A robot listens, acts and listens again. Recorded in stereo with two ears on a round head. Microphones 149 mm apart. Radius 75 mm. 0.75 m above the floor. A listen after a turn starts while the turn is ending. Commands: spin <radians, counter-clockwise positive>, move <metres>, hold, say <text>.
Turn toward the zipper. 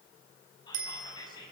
hold
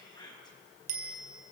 hold
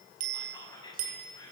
say I can't make out a zipper to turn to.